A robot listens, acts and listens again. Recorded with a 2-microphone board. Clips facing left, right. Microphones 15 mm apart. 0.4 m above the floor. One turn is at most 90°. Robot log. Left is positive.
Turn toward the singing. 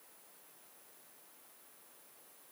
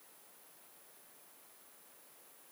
cmd idle
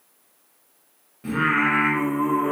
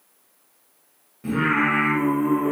note: The singing: about 20° left or 160° left.
cmd yaw +20
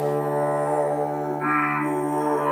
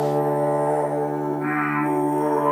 note: The singing: about 25° left or 155° left.
cmd yaw +25
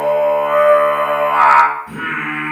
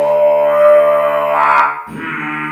end: Facing the singing, 1 to 2 m away.